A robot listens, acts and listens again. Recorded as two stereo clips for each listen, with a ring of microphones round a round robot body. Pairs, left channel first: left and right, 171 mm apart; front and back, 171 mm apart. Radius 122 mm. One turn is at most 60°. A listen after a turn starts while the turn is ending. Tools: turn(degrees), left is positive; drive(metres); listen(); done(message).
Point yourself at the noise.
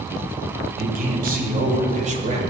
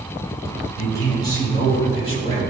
turn(degrees=-50)
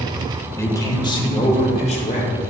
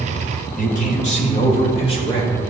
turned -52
turn(degrees=55)
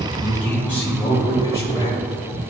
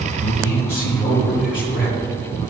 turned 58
turn(degrees=20)
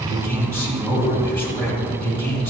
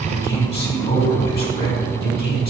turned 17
done("Facing the man speaking.")